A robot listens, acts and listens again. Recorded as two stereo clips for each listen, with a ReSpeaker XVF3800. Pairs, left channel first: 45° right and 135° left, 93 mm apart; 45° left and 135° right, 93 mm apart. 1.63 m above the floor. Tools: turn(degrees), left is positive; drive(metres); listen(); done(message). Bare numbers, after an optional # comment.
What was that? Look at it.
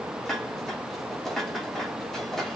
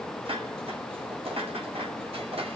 # The dishes clattering: 130° right.
turn(-130)
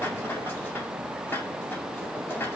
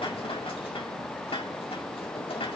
# The dishes clattering is now 25° left.
turn(25)
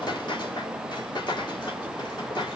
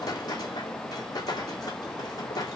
done("Found it: dishes clattering, straight ahead, 2 to 4 m away.")